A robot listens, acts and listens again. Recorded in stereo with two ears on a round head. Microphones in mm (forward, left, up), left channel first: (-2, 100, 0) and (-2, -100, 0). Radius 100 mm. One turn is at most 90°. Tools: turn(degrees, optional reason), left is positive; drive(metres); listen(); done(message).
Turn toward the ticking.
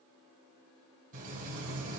listen()
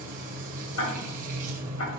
turn(degrees=65, reason="The ticking: about 65° left or 115° left.")
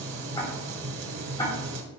turn(degrees=20, reason="So it is at 20° left.")
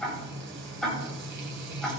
done("Found it: ticking, straight ahead, 2 to 4 m away.")